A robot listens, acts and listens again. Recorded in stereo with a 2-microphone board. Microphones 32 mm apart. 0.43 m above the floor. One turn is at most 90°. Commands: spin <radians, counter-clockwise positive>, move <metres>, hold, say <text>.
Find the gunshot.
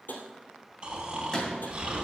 spin 0.26
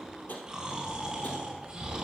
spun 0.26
hold
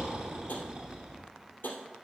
say I heard a gunshot, but can't make it out now. It was about straight ahead or 150° left.